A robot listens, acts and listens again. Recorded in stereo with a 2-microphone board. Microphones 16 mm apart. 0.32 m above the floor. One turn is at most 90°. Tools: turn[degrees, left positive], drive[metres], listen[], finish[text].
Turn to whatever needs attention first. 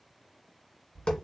Action: listen[]
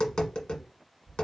Action: listen[]
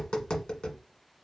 Action: finish[I can't make out anything urgent, only tapping.]